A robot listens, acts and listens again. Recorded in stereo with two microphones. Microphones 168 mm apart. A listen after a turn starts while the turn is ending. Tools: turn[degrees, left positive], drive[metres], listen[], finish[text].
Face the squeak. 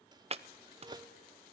Thought: The squeak: about 25° right or 155° right.
Action: turn[-25]
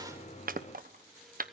Action: listen[]
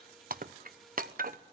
Action: listen[]
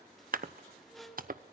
Action: finish[Facing the squeak.]